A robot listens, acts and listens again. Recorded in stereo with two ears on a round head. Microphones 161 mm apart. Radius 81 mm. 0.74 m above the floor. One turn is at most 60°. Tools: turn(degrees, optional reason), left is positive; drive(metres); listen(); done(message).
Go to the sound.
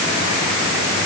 listen()
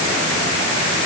listen()
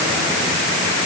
done("I can't make out anything to turn to.")